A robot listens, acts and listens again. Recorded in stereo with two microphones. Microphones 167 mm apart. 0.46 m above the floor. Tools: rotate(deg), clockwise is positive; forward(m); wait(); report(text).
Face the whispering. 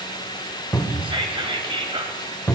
rotate(30)
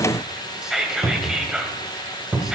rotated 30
report("Found it: whispering, straight ahead.")